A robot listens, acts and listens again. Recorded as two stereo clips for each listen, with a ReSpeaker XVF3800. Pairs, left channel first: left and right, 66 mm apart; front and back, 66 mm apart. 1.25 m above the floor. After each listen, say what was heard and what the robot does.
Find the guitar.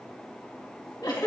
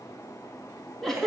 Keep listening.
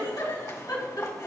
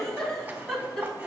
Keep listening.
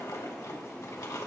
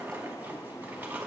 I can't make out a guitar, only a giggle and a zipper.